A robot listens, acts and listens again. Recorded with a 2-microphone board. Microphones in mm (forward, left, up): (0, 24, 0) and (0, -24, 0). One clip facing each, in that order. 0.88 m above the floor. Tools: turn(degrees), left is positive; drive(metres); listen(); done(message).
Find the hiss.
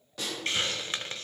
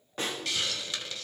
turn(degrees=35)
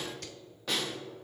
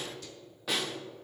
listen()
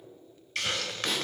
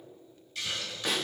turn(degrees=105)
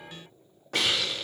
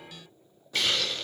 done("Facing the hiss.")